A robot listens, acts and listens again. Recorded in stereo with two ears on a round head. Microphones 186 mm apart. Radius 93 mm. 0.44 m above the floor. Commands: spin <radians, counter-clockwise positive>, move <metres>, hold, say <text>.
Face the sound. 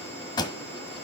spin 0.35
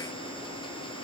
hold
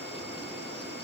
say I heard a pop, but can't make it out now. It was about straight ahead or 140° left.